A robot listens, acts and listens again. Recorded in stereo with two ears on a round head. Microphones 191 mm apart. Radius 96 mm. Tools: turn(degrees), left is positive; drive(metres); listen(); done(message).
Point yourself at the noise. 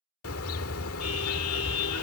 turn(degrees=90)
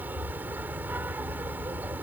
turn(degrees=-10)
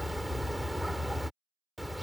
done("Found it: a car horn, straight ahead.")